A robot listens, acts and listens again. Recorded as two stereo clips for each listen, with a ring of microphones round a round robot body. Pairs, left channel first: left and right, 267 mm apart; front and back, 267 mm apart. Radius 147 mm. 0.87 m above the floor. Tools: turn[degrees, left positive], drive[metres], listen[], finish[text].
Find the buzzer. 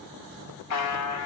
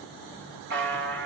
Thought: The buzzer: 125° left.
Action: turn[125]
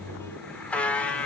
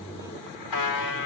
Action: finish[Found it: a buzzer, straight ahead.]